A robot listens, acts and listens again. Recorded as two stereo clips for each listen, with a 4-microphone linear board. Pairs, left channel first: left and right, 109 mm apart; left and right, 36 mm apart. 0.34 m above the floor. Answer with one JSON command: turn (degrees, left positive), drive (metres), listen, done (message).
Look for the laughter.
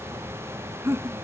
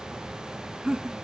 {"turn": -25}
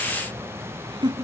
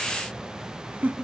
{"turn": -130}
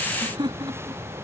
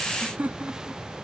{"turn": -50}
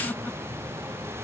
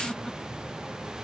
{"listen": true}
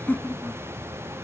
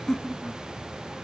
{"turn": 15}
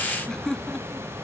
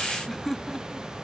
{"done": "Found it: laughter, straight ahead."}